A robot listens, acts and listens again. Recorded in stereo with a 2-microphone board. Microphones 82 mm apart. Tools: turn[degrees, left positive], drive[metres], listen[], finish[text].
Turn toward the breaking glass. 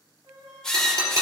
Thought: The breaking glass: about 50° right or 130° right.
Action: turn[-50]
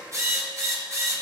Action: listen[]
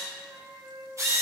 Action: finish[I heard breaking glass, but can't make it out now. It was about straight ahead or 80° right.]